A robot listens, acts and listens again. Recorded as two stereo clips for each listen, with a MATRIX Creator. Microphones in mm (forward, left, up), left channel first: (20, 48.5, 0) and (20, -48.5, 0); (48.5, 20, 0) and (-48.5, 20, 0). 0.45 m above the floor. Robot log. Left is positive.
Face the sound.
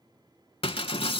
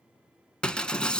note: The breaking glass: 80° left.
cmd yaw +80
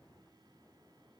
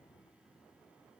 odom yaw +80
end: I heard breaking glass from this way, but can't make it out now.